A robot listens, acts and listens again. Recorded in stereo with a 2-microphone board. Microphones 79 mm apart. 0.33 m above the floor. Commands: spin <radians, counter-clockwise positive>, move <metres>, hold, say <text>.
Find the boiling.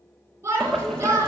spin 0.52
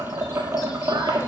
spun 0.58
spin -0.52
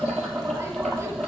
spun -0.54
say Found it: boiling, straight ahead, 1 to 2 m away.